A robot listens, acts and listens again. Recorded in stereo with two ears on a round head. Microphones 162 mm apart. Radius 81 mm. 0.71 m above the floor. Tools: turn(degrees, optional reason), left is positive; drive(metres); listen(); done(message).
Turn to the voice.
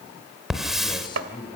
turn(degrees=25, reason="The man speaking: about 25° left or 155° left.")
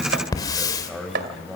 done("Facing the man speaking, over 4 m away.")